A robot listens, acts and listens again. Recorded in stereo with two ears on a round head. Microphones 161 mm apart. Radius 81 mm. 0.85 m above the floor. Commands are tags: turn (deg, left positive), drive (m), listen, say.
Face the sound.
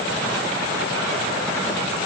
<listen/>
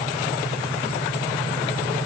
<listen/>
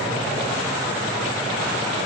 <say>I can't make out anything to turn to.</say>